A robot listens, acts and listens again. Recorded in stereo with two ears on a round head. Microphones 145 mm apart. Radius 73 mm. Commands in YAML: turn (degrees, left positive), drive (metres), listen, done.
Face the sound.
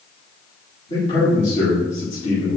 turn: 45
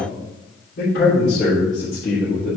turn: 70
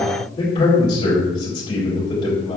turn: 30
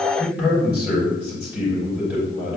done: "Found it: a man speaking, straight ahead."